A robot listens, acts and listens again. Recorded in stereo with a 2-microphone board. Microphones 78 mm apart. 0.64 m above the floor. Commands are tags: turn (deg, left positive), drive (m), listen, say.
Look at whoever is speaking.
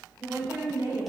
<turn deg="-45"/>
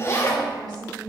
<turn deg="-60"/>
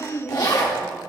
<say>Found it: a woman speaking, straight ahead, 2 to 4 m away.</say>